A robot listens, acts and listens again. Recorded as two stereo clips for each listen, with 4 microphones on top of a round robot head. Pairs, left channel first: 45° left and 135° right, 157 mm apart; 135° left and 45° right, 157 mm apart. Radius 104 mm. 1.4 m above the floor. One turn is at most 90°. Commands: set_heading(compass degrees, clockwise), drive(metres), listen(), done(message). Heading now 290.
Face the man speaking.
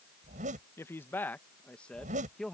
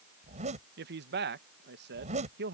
set_heading(335)
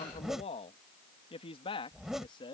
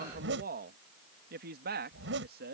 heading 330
set_heading(350)
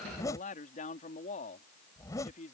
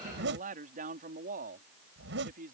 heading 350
done("Found it: a man speaking, straight ahead.")